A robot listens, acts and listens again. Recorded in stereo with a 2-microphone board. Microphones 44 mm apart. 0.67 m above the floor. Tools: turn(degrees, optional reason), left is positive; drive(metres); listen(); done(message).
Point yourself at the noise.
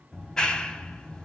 turn(degrees=15, reason="The clap: about 15° left or 165° left.")
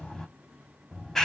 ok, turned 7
turn(degrees=30)
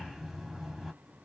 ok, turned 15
done("Facing the clap, under 1 m away.")